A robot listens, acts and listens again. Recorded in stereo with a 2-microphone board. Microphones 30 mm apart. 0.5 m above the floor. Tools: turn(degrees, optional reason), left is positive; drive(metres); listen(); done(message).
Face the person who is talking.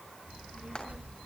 turn(degrees=-70, reason="The child speaking: about 70° right or 110° right.")
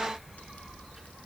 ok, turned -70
turn(degrees=-10, reason="So it is at 10° right.")
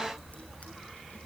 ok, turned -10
turn(degrees=-10, reason="The child speaking is now 10° right.")
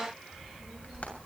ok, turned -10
done("Found it: a child speaking, straight ahead, over 4 m away.")